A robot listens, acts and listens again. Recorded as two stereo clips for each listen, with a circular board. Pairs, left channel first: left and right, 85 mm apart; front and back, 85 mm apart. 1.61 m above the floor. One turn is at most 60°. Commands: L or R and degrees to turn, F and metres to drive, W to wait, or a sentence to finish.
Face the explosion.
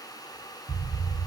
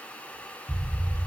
R60
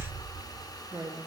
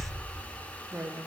R60
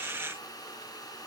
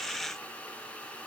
R20
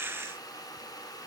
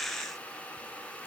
I heard an explosion from this way, but can't make it out now.